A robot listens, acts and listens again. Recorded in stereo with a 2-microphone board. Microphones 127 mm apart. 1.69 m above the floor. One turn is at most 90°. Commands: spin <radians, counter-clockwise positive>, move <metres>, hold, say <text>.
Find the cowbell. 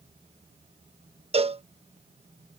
spin -0.87
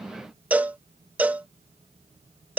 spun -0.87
spin -0.26
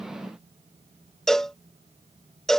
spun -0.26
say Found it: a cowbell, straight ahead.